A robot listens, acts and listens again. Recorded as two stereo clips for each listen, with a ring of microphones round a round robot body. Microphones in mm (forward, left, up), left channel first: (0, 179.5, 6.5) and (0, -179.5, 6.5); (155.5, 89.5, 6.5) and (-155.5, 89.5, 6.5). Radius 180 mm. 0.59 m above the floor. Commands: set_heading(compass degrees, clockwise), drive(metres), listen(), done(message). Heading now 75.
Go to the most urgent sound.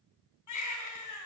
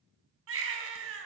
set_heading(300)
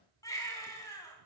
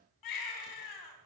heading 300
set_heading(290)
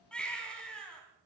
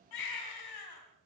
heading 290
drive(1.0)
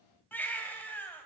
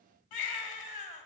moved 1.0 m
drive(1.0)
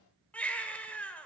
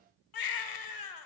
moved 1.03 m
drive(1.0)
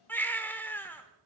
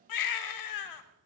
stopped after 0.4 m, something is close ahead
done("I am next to the baby crying.")